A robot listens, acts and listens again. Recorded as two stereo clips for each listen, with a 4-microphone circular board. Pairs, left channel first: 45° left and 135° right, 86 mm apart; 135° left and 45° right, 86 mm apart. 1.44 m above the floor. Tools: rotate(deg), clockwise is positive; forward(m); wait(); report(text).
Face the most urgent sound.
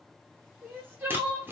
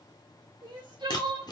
rotate(70)
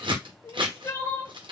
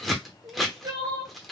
report("Found it: crying, straight ahead.")